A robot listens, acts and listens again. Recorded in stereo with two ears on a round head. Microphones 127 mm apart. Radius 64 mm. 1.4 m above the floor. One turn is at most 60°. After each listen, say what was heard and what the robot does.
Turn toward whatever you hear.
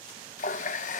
The running tap: about 55° left or 125° left. Turn 55° left.
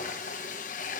So it is at 60° left. Turn 60° left.
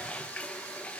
The running tap is now 10° left. Turn 10° left.
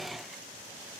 Found it: a running tap, straight ahead.